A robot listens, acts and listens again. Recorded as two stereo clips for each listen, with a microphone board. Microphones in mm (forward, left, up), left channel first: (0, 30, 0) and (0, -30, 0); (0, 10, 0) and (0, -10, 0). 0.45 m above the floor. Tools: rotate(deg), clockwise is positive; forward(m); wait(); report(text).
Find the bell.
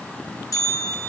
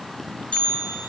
rotate(-90)
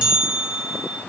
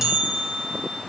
rotate(15)
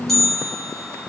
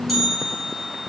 report("Found it: a bell, straight ahead.")